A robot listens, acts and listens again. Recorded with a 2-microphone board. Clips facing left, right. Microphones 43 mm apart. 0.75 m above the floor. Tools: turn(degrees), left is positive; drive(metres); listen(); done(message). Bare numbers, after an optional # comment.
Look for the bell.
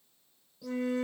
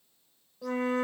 listen()
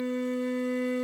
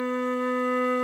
listen()
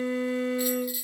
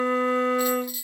turn(30)
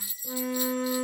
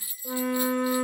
# So it is at 20° right.
turn(-20)
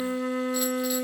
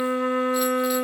listen()
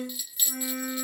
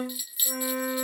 # The bell is now 10° right.
turn(-10)
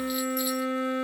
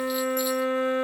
listen()
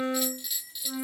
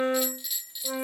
done("Found it: a bell, straight ahead, under 1 m away.")